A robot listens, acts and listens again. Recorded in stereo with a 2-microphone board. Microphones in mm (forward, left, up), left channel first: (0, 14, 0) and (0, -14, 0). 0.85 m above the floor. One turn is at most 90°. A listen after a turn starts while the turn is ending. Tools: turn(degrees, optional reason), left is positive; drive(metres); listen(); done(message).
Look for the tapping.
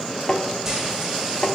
turn(degrees=25, reason="The tapping: about 25° left or 155° left.")
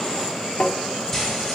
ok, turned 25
turn(degrees=90, reason="So it is at 130° left.")
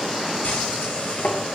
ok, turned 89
turn(degrees=40, reason="The tapping is now 40° left.")
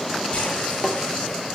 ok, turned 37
done("Facing the tapping.")